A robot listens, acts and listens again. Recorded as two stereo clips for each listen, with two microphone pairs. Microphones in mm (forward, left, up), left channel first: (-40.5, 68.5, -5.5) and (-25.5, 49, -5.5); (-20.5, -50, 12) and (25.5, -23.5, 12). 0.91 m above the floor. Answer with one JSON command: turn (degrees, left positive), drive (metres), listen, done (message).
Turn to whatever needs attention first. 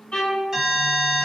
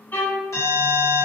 {"turn": -120}
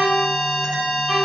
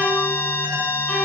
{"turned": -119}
{"done": "Found it: an alarm, straight ahead."}